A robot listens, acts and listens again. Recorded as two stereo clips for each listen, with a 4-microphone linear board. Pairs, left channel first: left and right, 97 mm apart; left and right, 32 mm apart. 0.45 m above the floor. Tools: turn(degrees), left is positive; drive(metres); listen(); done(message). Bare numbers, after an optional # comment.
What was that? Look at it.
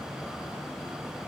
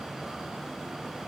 listen()
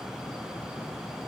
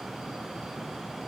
listen()
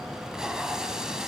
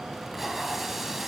turn(-30)
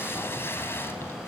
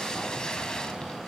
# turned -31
# So it is at 25° left.
turn(25)
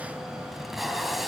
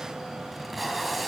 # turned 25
done("Facing the tape being pulled.")